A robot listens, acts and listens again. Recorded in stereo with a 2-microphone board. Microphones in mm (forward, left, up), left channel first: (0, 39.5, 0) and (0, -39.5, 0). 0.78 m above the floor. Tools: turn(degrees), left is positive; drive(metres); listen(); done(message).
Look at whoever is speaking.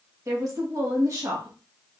turn(degrees=-45)
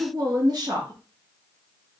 turn(degrees=-80)
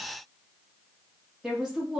turn(degrees=-10)
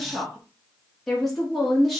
done("Facing the woman speaking, 1 to 2 m away.")